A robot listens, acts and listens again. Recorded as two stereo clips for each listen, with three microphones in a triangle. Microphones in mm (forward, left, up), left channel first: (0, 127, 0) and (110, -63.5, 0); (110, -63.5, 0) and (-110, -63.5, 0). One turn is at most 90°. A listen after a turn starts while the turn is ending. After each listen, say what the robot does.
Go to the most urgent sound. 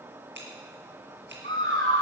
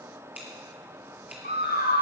Turn 40° right.
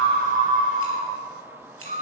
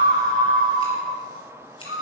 Turn 10° right.
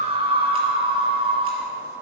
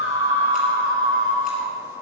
Drive 1.0 m forward.
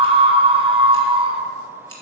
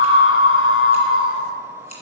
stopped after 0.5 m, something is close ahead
Blocked. The scream is further on, straight ahead.